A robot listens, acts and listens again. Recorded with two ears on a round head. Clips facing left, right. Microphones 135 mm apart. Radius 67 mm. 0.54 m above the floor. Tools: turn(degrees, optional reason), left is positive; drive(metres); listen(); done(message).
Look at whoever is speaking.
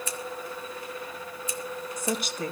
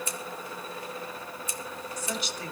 turn(degrees=45, reason="The woman speaking: about 45° left or 135° left.")
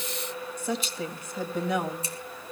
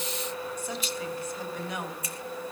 turn(degrees=90, reason="So it is at 90° left.")
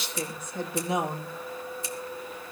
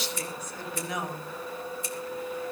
turn(degrees=25, reason="The woman speaking is now 25° left.")
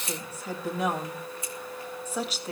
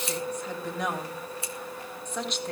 done("Found it: a woman speaking, straight ahead, 2 to 4 m away.")